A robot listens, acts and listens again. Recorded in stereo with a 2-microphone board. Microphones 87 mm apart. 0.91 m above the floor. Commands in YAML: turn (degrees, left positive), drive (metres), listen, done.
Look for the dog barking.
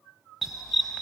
turn: 30
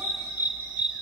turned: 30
turn: -15
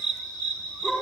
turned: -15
turn: 10
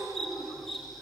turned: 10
done: "Found it: a dog barking, straight ahead, over 4 m away."